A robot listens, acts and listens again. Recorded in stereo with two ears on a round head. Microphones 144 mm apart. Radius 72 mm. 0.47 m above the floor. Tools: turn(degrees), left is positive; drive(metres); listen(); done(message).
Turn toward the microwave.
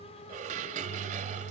turn(degrees=-55)
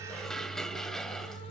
turn(degrees=-65)
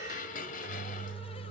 turn(degrees=-10)
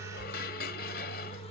done("Facing the microwave, under 1 m away.")